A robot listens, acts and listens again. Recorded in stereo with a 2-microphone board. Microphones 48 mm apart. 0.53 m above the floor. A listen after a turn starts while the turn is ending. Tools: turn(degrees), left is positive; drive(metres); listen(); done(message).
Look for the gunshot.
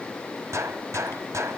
turn(degrees=-90)
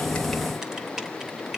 done("I heard a gunshot from this way, but can't make it out now.")